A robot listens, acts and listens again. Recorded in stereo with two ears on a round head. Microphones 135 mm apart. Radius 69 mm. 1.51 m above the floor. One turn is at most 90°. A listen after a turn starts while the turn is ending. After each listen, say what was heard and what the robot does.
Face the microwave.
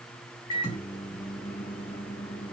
The microwave: about 25° left or 155° left. Turn 25° left.
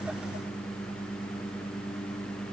Found it: a microwave, straight ahead.